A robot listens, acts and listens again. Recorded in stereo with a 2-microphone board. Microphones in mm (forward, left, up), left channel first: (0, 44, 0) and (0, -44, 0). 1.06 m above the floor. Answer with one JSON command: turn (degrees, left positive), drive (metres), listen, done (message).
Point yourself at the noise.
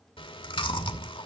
{"turn": 90}
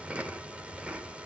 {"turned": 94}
{"turn": -15}
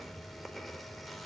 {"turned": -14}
{"done": "Facing the chewing, 2 to 4 m away."}